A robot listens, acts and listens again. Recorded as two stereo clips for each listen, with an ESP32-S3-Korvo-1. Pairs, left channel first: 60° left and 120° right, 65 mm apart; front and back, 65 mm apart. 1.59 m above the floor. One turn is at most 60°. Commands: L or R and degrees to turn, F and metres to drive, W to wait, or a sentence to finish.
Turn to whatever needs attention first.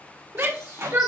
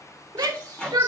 R60
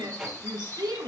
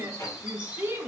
R60
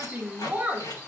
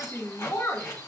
R50
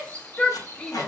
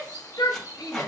R10
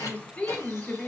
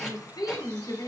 Facing the shout, 1 to 2 m away.